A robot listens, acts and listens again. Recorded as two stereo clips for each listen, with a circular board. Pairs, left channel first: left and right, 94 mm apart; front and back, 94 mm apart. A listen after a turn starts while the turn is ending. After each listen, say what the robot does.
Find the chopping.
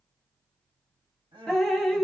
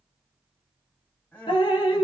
Keep listening.
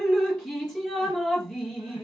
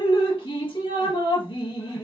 Keep listening.
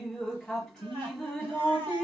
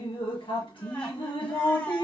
I can't make out chopping, only crying and dripping.